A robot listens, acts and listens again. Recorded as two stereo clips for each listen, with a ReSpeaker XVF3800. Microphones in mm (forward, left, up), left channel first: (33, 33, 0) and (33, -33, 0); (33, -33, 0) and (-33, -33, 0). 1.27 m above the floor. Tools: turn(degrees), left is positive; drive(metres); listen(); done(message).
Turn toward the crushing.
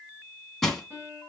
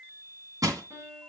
turn(degrees=175)
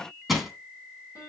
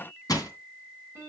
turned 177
done("Found it: crushing, straight ahead.")